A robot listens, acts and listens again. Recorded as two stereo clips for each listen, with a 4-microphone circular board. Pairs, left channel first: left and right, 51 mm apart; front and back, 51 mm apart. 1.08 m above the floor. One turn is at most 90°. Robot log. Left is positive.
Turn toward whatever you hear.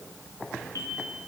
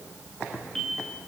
note: The bell: 80° left.
cmd yaw +80
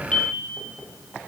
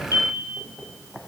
note: The bell is now 20° left.
cmd yaw +20
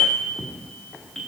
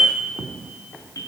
end: Found it: a bell, straight ahead.